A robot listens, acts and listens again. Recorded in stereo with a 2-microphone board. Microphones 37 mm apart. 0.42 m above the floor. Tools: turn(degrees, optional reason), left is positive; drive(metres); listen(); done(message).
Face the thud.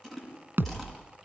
turn(degrees=-65, reason="The thud: about 65° right or 115° right.")
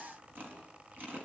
listen()
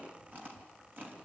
done("I heard a thud, but can't make it out now. It was about straight ahead or 50° right.")